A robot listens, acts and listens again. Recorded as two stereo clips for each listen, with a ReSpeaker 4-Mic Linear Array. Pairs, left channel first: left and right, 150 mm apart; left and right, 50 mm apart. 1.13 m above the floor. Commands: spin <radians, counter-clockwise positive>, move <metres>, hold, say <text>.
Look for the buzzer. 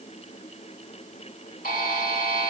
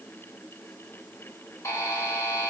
spin 1.31
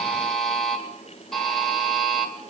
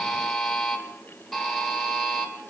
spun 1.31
say Found it: a buzzer, straight ahead, 2 to 4 m away.